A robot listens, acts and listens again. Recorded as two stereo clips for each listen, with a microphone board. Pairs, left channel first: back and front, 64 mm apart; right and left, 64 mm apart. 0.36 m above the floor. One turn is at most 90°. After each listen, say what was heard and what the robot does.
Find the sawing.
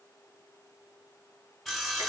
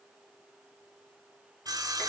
The sawing: 90° left. Turn 90° left.
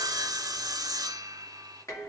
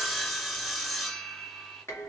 Found it: sawing, straight ahead, 1 to 2 m away.